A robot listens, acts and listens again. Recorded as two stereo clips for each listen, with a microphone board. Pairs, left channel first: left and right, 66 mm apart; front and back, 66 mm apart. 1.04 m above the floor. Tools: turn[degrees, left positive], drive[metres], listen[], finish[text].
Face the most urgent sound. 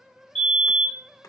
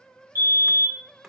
Thought: The fire alarm: 15° left.
Action: turn[15]
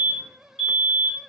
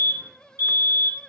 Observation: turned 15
Action: finish[Found it: a fire alarm, straight ahead, 2 to 4 m away.]